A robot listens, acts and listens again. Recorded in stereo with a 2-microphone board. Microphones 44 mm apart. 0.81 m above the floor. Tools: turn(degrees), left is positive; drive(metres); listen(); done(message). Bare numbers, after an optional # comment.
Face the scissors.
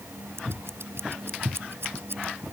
turn(-90)
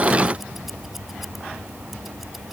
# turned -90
listen()
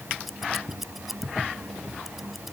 done("Found it: scissors, straight ahead.")